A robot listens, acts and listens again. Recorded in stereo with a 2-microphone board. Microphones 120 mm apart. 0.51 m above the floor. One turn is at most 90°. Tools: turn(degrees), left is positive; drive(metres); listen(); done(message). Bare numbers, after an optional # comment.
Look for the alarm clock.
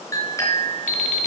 turn(90)
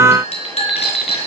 done("Found it: an alarm clock, straight ahead.")